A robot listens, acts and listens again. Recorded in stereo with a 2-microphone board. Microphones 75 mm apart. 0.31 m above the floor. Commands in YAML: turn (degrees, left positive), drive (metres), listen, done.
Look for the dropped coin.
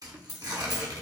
turn: -55
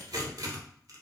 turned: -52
listen: true
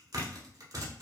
done: "I heard a dropped coin, but can't make it out now. It was about 5° right or 70° right."